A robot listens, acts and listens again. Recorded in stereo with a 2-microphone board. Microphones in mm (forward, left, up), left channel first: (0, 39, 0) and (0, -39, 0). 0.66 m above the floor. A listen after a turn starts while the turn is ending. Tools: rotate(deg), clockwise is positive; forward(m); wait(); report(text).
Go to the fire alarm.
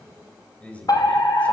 rotate(-60)
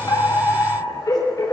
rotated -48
rotate(-60)
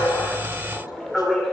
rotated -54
forward(1.0)
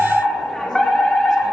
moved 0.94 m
forward(1.0)
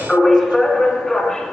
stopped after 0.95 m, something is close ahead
rotate(-10)
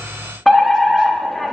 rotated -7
report("Arrived at the fire alarm, straight ahead.")